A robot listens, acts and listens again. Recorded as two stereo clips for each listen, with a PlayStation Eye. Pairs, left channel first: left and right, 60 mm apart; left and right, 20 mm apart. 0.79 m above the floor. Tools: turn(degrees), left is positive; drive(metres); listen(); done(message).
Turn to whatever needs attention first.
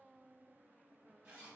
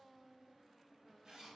listen()
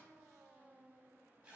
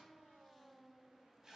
listen()
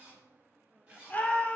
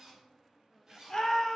turn(degrees=25)
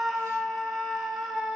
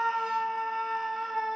done("Found it: a scream, straight ahead, 2 to 4 m away.")